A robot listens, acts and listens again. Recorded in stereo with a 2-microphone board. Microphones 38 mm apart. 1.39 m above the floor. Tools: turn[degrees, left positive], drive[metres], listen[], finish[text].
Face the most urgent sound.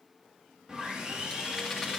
Action: listen[]
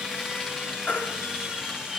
Thought: The baby crying: about 50° left or 130° left.
Action: turn[50]
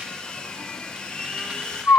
Thought: So it is at 80° left.
Action: turn[80]
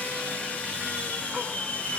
Action: listen[]
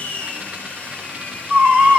Thought: The baby crying is now 30° right.
Action: turn[-30]
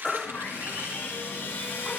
Thought: The baby crying is now 20° left.
Action: turn[20]
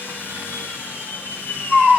Action: finish[Found it: a baby crying, straight ahead.]